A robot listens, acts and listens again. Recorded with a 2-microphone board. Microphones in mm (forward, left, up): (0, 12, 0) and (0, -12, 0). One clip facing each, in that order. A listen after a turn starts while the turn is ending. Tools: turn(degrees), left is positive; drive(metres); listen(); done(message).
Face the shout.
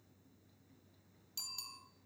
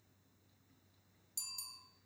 listen()
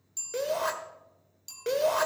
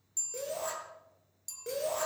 turn(degrees=55)
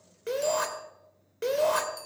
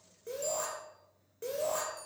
turn(degrees=65)
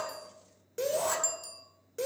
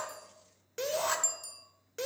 turn(degrees=-25)
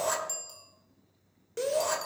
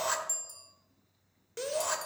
done("Facing the shout, 2 to 4 m away.")